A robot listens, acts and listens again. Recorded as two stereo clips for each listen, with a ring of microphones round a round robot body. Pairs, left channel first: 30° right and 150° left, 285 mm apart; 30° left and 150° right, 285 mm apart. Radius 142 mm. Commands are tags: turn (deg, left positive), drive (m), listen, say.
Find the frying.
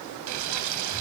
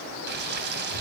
<turn deg="160"/>
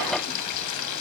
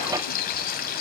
<turn deg="-25"/>
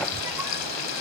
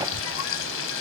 <turn deg="-10"/>
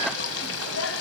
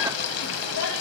<say>Facing the frying, 1 to 2 m away.</say>